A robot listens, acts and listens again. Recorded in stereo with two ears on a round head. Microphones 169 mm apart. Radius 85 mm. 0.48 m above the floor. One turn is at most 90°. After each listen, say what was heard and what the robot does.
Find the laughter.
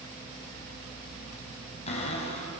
Keep listening.
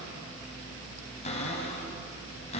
Keep listening.
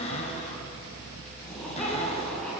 Turn 30° left.
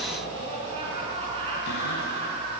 So it is at 30° right. Turn 30° right.
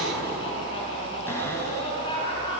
The laughter is now 25° left. Turn 25° left.
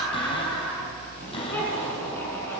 The laughter is now 10° left. Turn 10° left.
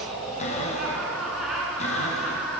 Found it: laughter, straight ahead.